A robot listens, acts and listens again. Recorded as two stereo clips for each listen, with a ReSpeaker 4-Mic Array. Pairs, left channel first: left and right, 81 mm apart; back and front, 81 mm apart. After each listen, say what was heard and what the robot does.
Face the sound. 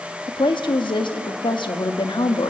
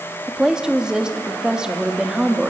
The woman speaking: 80° left. Turn 80° left.
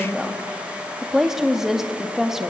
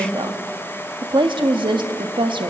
Facing the woman speaking, 1 to 2 m away.